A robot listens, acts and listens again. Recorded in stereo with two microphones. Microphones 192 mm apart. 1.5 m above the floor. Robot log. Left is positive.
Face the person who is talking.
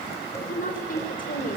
note: The woman speaking: about 45° left or 135° left.
cmd yaw +45
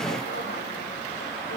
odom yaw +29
cmd idle
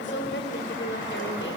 note: So it is at 105° left.
cmd yaw +105
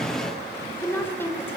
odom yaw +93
note: The woman speaking is now 10° left.
cmd yaw +10
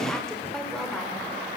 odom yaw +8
cmd idle
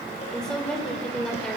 end: Facing the woman speaking.